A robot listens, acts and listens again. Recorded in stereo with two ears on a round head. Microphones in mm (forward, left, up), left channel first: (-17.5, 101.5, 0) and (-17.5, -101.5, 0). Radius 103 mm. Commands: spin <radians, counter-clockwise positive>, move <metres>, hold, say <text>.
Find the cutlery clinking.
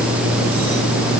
hold
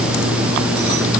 hold
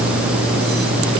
say I can't make out cutlery clinking to turn to.